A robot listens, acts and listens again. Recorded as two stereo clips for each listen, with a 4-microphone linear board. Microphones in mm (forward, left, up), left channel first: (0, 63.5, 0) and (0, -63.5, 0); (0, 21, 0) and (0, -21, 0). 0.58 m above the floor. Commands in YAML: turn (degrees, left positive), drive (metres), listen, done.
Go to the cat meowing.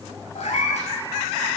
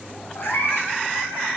turn: 65
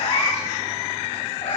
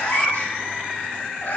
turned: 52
turn: 60
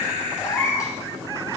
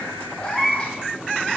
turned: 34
turn: 25
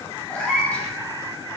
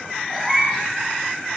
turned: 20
turn: 10
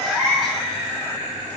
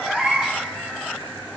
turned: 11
drive: 1.0
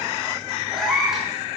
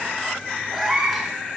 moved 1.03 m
drive: 1.0
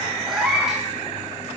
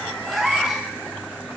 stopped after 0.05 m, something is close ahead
done: "I am next to the cat meowing."